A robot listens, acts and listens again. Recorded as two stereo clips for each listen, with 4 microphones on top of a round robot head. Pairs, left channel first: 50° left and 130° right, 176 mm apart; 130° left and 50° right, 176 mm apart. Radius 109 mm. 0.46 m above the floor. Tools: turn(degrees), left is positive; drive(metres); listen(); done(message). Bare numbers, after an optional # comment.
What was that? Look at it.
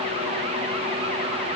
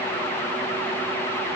listen()
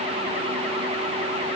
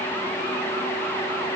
listen()
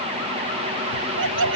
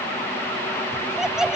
# The laughter: 135° right.
turn(-135)
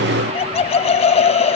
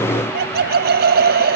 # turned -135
# The laughter is now 10° right.
turn(-10)
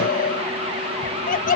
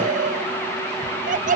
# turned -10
done("Facing the laughter.")